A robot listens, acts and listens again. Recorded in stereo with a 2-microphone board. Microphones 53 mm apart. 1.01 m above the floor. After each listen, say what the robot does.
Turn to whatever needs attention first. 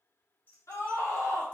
Turn 65° left.
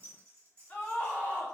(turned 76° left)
Turn 30° left.
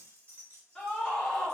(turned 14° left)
Turn 15° left.
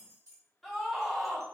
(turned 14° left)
Found it: a scream, straight ahead, under 1 m away.